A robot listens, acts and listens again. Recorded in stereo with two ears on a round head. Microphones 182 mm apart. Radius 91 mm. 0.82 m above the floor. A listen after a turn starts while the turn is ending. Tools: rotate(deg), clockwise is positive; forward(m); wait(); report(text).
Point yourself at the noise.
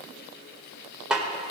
rotate(30)
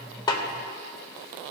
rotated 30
wait()
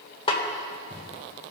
rotate(-25)
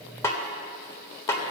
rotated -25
rotate(-15)
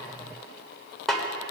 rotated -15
report("Facing the snare drum.")